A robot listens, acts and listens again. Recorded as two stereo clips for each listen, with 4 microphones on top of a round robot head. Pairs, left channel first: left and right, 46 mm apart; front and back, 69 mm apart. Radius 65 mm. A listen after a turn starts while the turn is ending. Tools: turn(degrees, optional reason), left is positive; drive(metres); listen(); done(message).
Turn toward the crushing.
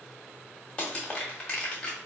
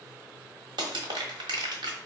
turn(degrees=165, reason="The crushing: 165° left.")
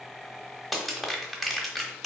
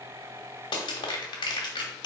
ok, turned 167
done("Found it: crushing, straight ahead, 1 to 2 m away.")